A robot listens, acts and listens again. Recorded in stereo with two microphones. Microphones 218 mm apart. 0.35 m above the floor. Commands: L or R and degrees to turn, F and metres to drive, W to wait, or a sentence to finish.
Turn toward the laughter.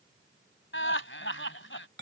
L65
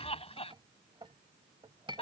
L30
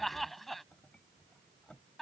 Facing the laughter.